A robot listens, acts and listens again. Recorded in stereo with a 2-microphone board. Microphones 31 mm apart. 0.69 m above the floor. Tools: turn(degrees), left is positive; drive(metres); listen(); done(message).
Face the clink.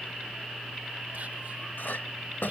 turn(degrees=75)
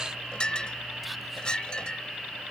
turn(degrees=30)
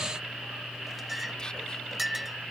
done("Facing the clink.")